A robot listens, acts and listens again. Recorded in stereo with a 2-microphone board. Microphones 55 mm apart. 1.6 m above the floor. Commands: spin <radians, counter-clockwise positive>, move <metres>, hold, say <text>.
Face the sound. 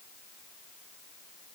hold
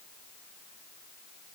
hold
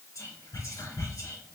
spin 1.57
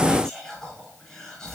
spin 0.26
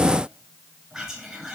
say Found it: whispering, straight ahead.